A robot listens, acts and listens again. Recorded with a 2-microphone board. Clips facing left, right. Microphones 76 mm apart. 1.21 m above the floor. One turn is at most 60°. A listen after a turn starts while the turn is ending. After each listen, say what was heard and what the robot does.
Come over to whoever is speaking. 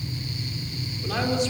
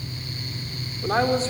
The man speaking: about 35° right or 145° right. Turn 35° right.
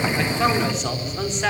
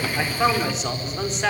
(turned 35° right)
Drive 1.0 m forward.
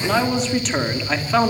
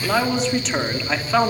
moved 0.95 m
Drive 1.0 m forward.
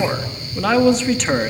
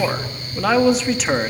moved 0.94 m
Drive 1.0 m forward.
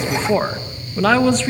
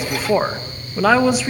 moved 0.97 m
The man speaking is now 10° right. Turn 10° right.
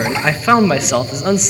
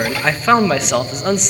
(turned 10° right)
Drive 1.0 m forward.
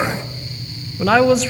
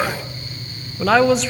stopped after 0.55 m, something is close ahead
Arrived at the man speaking, straight ahead.